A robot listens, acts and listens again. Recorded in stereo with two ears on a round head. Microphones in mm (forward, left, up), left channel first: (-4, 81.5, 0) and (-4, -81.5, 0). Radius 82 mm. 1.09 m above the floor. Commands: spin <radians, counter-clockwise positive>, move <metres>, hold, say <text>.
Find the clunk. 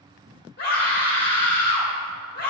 hold
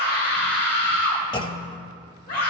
spin 0.44
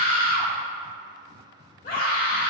hold
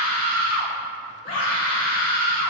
say I heard a clunk, but can't make it out now. It was about straight ahead or 130° left.